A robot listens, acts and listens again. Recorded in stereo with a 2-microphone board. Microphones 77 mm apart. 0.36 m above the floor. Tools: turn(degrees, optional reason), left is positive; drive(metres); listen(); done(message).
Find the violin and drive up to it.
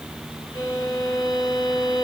turn(degrees=70, reason="The violin: about 70° left or 110° left.")
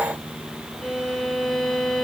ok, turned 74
drive(metres=1.0)
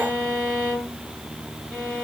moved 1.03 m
drive(metres=1.0)
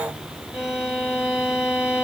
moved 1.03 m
turn(degrees=-10, reason="The violin is now 10° right.")
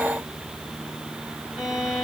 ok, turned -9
drive(metres=1.0)
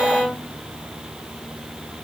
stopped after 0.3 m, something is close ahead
done("I am next to the violin.")